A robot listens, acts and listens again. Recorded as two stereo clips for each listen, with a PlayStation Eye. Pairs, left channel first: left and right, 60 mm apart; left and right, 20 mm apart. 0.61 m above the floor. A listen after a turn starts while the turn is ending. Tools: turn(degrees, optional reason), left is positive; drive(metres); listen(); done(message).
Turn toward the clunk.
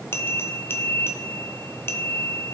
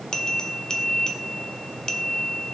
listen()
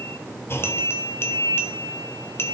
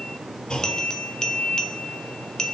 turn(degrees=45, reason="The clunk: about 45° left or 135° left.")
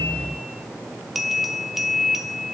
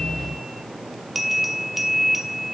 listen()
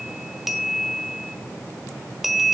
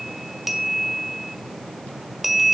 done("I heard a clunk, but can't make it out now. It was about straight ahead or 90° left.")